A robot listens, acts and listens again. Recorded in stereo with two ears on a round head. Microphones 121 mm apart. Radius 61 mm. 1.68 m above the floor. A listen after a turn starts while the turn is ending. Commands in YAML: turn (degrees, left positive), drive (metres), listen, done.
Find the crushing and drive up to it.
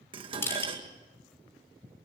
turn: 20
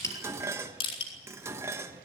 turn: 140
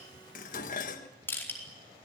turn: 15
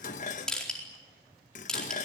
drive: 1.0
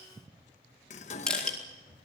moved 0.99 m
turn: 10
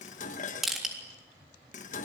drive: 1.0
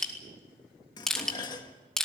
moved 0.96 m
drive: 1.0
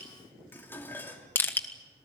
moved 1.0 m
turn: 15
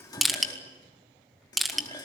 drive: 1.0
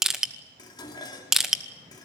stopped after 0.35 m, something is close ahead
done: "Arrived at the crushing, straight ahead."